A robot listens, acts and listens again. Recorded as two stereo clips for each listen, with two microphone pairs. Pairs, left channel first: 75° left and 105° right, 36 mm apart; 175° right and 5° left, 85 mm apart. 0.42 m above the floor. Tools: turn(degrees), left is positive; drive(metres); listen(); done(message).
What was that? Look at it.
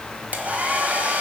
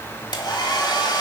turn(degrees=-150)
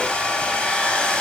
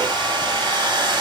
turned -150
turn(degrees=15)
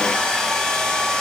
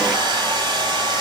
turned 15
done("Found it: a hair dryer, straight ahead, 1 to 2 m away.")